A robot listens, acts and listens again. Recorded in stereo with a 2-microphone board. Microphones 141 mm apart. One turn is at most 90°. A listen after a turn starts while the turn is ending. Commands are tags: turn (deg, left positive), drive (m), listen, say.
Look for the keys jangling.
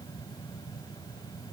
<listen/>
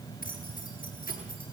<turn deg="90"/>
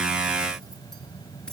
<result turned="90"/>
<listen/>
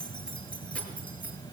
<turn deg="10"/>
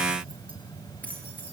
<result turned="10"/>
<turn deg="10"/>
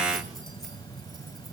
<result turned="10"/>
<listen/>
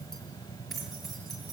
<say>Found it: keys jangling, straight ahead.</say>